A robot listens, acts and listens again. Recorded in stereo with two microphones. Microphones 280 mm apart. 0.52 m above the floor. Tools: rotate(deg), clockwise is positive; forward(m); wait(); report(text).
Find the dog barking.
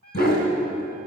rotate(-35)
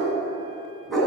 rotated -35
report("Found it: a dog barking, straight ahead, 2 to 4 m away.")